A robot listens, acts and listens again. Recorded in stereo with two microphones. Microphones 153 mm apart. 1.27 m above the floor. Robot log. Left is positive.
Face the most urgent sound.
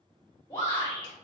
note: The shout: about 25° left or 155° left.
cmd yaw +25
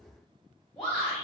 end: Found it: a shout, straight ahead, 1 to 2 m away.